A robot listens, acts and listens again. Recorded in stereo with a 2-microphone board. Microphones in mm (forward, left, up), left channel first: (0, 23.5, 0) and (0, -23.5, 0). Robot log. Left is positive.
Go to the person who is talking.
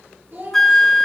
note: The child speaking: about 50° right or 130° right.
cmd yaw -50
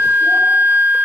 cmd idle
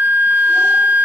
cmd idle
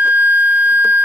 end: I heard a child speaking, but can't make it out now. It was about straight ahead or 80° right. I did not reach it.